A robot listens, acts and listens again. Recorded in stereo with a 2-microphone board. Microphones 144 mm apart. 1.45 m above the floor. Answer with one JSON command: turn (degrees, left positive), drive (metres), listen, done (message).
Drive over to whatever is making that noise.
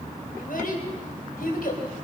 {"turn": 75}
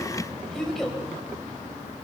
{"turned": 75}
{"drive": 1.0}
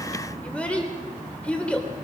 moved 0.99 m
{"turn": 10}
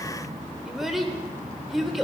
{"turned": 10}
{"drive": 1.0}
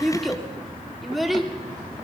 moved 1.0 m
{"drive": 1.0}
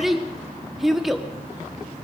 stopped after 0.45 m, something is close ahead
{"done": "Arrived at the child speaking, straight ahead."}